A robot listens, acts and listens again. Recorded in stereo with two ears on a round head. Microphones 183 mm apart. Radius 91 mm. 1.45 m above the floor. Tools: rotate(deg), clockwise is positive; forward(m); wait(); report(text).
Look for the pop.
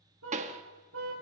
rotate(35)
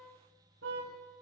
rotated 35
wait()
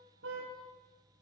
report("I heard a pop, but can't make it out now. It was about straight ahead or 110° right.")